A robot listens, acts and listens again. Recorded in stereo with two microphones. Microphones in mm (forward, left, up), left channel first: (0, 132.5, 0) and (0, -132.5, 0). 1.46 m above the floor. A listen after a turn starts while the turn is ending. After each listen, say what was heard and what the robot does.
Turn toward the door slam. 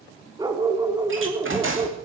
The door slam: about 50° right or 130° right. Turn 50° right.
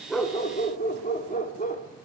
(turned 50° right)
Keep listening.
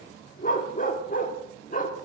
I heard a door slam, but can't make it out now. It was about straight ahead or 80° right.